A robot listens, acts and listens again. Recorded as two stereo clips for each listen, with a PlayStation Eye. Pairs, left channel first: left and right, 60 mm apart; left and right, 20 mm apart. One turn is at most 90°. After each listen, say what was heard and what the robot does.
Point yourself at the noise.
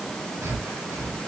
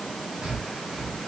The breathing: about 50° right or 130° right. Turn 50° right.
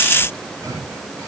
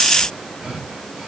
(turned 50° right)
So it is at 75° right. Turn 75° right.
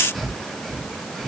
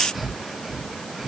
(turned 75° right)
Facing the breathing, 2 to 4 m away.